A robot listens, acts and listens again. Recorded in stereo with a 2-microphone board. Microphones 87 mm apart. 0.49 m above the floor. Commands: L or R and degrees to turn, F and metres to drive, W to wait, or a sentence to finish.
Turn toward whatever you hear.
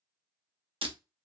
R90
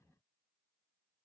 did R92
Facing where the breaking glass came from. I can't hear it now.